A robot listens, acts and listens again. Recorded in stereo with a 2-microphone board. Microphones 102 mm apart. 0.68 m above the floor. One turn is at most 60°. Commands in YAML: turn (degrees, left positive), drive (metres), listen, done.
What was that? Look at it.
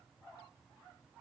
listen: true
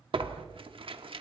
turn: -60
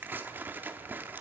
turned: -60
turn: -25
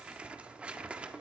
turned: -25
turn: -15
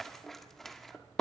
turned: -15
done: "Facing the tearing paper, 1 to 2 m away."